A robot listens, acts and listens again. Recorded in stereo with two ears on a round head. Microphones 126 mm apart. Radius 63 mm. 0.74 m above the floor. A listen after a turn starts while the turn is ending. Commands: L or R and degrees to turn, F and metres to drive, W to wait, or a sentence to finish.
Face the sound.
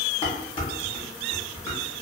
L35
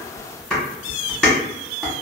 Found it: dishes clattering, straight ahead, 1 to 2 m away.